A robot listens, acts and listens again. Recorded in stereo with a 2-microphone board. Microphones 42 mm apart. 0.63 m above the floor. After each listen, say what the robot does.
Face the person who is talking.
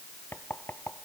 Keep listening.
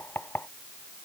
Keep listening.
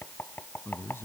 Turn 70° left.
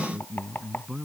Facing the man speaking.